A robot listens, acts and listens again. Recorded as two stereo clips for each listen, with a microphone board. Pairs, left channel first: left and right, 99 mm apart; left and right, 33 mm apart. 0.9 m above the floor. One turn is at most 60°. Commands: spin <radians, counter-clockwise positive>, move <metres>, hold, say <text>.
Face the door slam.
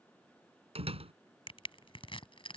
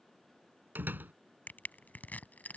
spin -1.05
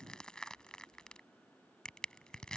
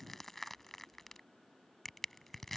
spin -0.52
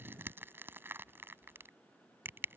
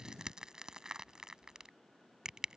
say I heard a door slam from this way, but can't make it out now.